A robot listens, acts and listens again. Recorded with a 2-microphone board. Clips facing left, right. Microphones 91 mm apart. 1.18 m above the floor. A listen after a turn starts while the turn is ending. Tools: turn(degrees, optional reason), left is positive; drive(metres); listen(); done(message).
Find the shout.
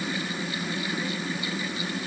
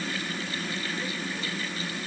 listen()
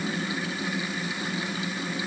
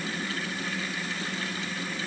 listen()
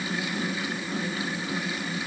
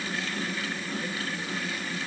done("I can't make out a shout to turn to.")